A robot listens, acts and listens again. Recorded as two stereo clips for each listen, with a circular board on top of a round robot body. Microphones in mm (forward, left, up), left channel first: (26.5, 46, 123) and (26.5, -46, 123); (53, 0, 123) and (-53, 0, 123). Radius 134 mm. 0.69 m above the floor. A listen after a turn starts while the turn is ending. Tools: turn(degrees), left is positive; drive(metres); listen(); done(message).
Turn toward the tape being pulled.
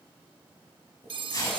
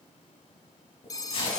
turn(degrees=40)
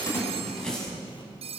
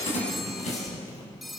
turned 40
turn(degrees=10)
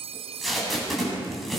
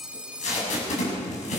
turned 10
done("Facing the tape being pulled.")